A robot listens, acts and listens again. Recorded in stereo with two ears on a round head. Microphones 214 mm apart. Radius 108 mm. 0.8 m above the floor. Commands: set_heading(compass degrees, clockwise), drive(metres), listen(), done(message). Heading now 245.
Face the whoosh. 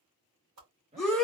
set_heading(320)
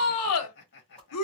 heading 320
listen()
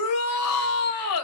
listen()
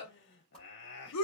done("Facing the whoosh, 2 to 4 m away.")